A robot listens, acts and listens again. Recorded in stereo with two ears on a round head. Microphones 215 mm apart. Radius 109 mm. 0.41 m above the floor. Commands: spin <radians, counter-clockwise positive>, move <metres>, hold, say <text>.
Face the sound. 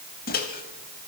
spin 0.70
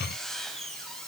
hold
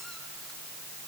hold
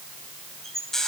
say Facing the microwave.